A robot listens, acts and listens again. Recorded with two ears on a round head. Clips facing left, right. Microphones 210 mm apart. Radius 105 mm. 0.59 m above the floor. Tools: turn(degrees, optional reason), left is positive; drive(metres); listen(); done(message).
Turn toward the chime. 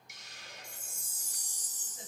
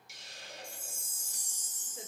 turn(degrees=35, reason="The chime: about 35° left or 145° left.")
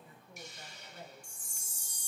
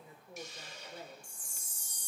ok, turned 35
turn(degrees=110, reason="So it is at 110° left.")
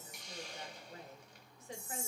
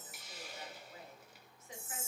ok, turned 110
done("Found it: a chime, straight ahead, 1 to 2 m away.")